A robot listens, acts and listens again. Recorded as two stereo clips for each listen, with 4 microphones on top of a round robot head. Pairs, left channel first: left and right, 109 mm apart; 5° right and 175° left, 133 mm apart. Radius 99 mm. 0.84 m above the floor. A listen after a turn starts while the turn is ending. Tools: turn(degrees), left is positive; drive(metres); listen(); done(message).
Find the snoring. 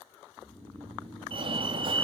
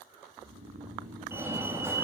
turn(degrees=165)
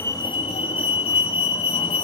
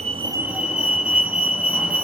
listen()
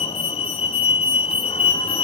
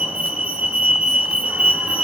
listen()
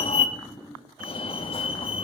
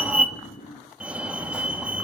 turn(degrees=15)
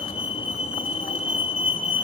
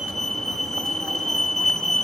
listen()
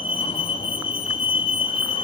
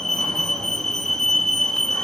listen()
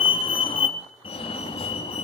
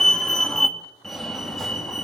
done("I heard snoring from this way, but can't make it out now.")